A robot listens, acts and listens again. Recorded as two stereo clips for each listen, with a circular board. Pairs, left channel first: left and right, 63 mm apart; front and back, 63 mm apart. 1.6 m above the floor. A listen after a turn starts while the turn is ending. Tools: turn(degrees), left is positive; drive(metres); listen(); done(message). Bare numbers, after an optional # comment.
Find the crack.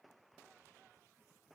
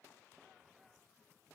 listen()
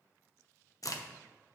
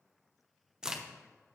# The crack: 100° left.
turn(100)
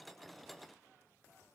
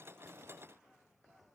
done("I heard a crack from this way, but can't make it out now.")